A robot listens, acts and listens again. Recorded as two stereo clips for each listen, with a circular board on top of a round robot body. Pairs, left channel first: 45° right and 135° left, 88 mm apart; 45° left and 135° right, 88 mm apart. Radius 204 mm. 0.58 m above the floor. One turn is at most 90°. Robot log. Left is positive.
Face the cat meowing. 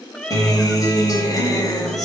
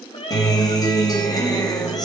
note: The cat meowing: 35° left.
cmd yaw +35
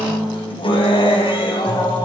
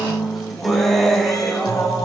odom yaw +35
cmd idle
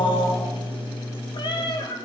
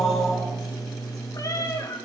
note: The cat meowing is now 10° right.
cmd yaw -10
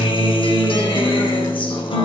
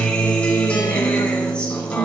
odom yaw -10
cmd idle
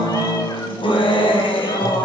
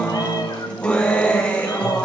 cmd idle
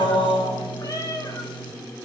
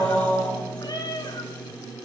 end: Found it: a cat meowing, straight ahead, 2 to 4 m away.